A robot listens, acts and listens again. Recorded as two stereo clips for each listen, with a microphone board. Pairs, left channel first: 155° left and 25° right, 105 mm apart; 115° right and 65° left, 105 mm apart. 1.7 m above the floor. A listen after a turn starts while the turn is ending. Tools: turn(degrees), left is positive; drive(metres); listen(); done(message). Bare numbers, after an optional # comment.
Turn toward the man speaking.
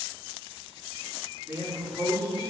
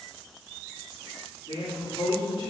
# The man speaking: 85° right.
turn(-85)
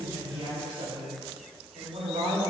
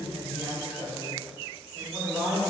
done("Found it: a man speaking, straight ahead, 2 to 4 m away.")